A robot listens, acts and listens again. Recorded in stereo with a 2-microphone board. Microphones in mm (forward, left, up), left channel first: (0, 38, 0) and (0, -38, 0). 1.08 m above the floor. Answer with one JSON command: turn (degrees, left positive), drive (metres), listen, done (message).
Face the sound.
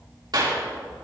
{"turn": -70}
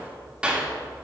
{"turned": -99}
{"turn": -15}
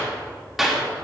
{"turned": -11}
{"done": "Found it: a clap, straight ahead."}